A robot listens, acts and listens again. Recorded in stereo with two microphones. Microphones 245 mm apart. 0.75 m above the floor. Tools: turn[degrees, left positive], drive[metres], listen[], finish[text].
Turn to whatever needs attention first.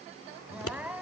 Action: turn[-30]
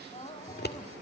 Thought: So it is at 25° left.
Action: turn[25]
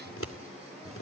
Action: listen[]
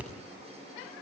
Action: listen[]
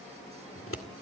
Action: finish[I heard crying from this way, but can't make it out now.]